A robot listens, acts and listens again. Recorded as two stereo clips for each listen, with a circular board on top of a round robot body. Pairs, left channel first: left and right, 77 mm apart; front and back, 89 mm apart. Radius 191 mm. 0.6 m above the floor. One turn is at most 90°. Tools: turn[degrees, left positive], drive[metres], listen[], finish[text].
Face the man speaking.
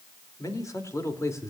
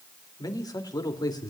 Thought: The man speaking: 40° left.
Action: turn[40]
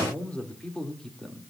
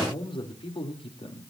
Action: finish[Found it: a man speaking, straight ahead, 2 to 4 m away.]